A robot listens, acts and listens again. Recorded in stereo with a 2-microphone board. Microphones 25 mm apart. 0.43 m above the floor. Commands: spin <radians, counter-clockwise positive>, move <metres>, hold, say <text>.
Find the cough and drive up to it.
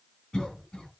spin 0.52
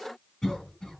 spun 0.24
spin 0.35
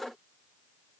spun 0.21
move 1.0
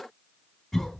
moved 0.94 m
move 1.0
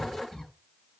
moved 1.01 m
spin 0.17
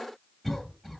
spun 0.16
move 1.0
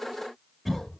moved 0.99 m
move 1.0
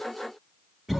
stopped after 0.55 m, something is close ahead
say Arrived at the cough, straight ahead.